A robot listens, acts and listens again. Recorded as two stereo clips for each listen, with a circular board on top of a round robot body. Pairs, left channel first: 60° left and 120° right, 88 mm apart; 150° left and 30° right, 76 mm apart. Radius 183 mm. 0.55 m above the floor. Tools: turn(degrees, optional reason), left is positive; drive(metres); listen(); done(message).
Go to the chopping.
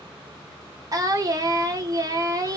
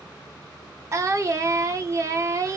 listen()
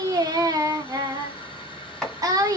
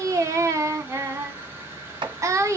turn(degrees=-30, reason="The chopping: 30° right.")
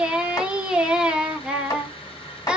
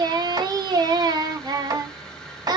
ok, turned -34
listen()
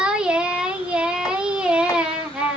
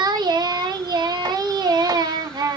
listen()
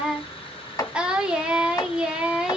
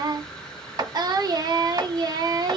drive(metres=1.0)
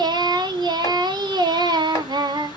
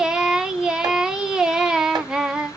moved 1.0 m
listen()
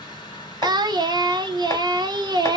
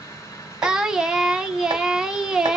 listen()
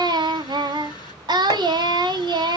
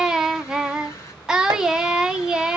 done("I heard chopping from this way, but can't make it out now. I did not reach it.")